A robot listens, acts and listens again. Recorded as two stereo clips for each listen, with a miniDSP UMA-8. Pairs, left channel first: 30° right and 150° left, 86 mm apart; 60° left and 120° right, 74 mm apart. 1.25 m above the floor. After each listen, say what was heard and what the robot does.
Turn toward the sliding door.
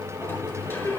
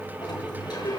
The sliding door: 35° left. Turn 35° left.
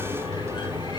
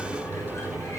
Found it: a sliding door, straight ahead.